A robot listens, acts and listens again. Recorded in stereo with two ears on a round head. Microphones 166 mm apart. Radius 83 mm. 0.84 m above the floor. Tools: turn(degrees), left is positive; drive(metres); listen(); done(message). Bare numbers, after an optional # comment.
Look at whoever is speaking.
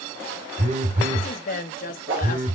# The woman speaking: about 45° left or 135° left.
turn(45)
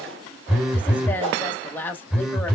# So it is at 10° left.
turn(10)
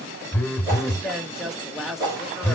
done("Found it: a woman speaking, straight ahead.")